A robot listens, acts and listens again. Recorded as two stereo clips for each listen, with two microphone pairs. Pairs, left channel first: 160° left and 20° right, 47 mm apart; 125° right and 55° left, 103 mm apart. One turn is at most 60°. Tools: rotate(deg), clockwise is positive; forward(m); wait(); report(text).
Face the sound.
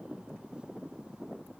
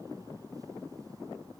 wait()
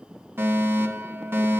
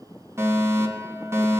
report("Found it: a fire alarm, straight ahead.")